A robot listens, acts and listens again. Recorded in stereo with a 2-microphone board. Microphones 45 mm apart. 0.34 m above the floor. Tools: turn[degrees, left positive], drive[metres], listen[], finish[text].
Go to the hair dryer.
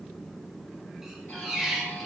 Action: listen[]
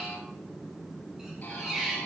Action: listen[]
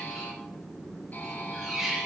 Action: finish[I can't make out a hair dryer, only a squeak and a buzzer.]